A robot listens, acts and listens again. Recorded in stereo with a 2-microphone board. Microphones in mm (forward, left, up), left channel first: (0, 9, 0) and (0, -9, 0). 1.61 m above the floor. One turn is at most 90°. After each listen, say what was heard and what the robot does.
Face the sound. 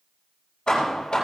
The hammering: about 40° left or 140° left. Turn 40° left.
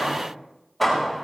Found it: hammering, straight ahead, over 4 m away.